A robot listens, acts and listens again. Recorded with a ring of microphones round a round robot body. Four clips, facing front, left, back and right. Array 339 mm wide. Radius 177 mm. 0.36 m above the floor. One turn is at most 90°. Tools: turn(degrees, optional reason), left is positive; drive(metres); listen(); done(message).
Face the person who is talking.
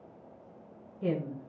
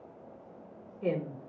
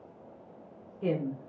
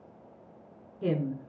turn(degrees=-90, reason="The woman speaking: 95° right.")
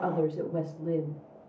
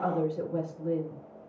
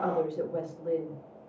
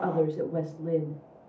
turn(degrees=-35, reason="The woman speaking is now 35° right.")
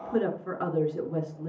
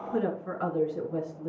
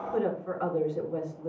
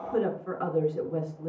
done("Facing the woman speaking, over 4 m away.")